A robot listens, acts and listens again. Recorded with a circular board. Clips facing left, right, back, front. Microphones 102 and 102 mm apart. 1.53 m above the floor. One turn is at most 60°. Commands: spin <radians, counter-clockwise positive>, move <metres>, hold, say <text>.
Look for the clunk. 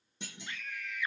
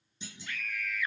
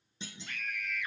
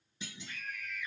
spin 1.05
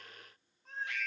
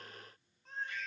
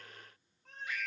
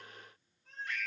spin 1.05
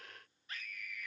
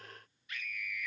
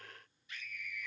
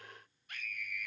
say Facing where the clunk came from. I can't hear it now.